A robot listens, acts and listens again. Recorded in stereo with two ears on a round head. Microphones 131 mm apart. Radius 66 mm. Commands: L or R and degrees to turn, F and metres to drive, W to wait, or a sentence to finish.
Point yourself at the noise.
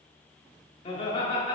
L35
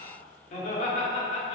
L130
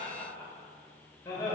L20
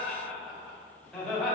Found it: laughter, straight ahead.